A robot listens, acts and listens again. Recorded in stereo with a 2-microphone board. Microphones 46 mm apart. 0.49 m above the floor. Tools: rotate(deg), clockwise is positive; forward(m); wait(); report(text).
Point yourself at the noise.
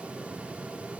wait()
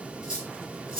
rotate(30)
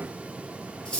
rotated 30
rotate(-20)
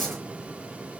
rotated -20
wait()
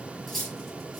report("Facing the cutlery clinking, over 4 m away.")